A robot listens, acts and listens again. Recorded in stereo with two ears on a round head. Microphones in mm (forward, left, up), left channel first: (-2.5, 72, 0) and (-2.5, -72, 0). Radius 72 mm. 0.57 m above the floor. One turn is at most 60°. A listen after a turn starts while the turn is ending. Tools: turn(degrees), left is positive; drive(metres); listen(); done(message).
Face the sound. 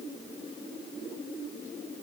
listen()
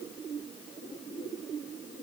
listen()
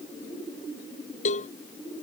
turn(degrees=45)
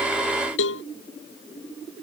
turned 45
turn(degrees=60)
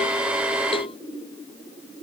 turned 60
turn(degrees=35)
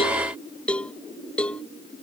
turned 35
done("Found it: a cowbell, straight ahead.")